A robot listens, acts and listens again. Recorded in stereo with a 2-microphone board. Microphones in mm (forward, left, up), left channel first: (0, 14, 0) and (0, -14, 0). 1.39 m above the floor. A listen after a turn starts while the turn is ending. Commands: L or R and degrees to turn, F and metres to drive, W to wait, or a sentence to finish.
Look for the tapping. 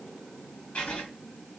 W
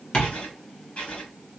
L45
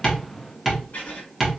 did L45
Found it: tapping, straight ahead.